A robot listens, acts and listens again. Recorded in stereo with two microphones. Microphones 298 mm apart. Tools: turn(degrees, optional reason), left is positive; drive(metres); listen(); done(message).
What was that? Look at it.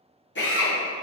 turn(degrees=40, reason="The drill: about 40° left or 140° left.")
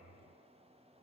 listen()
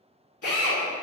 turn(degrees=95, reason="So it is at 95° left.")
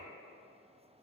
listen()
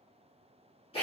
turn(degrees=20, reason="The drill is now 20° left.")
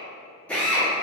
done("Found it: a drill, straight ahead, under 1 m away.")